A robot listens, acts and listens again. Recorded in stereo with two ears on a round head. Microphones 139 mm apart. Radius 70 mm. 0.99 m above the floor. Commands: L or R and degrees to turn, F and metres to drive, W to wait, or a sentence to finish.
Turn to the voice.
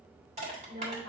R90
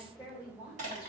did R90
R15
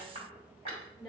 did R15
Facing the woman speaking.